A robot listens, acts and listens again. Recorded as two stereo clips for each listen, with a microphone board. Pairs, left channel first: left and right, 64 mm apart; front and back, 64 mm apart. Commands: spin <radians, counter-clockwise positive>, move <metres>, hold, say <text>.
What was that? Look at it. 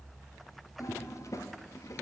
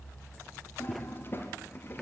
spin 0.96
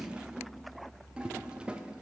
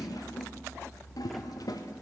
spin -0.26
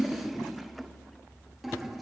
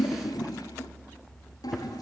say Facing the toilet flushing, under 1 m away.